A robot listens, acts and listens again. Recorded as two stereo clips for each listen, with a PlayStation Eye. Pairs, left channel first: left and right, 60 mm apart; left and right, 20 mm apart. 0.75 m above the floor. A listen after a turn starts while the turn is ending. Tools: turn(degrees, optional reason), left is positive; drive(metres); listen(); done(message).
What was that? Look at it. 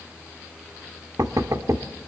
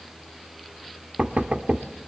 turn(degrees=-65, reason="The knocking: about 65° right or 115° right.")
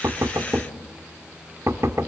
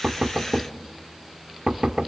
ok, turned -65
turn(degrees=-50, reason="So it is at 50° right.")
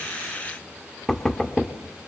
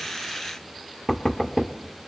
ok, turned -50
done("Found it: knocking, straight ahead, 1 to 2 m away.")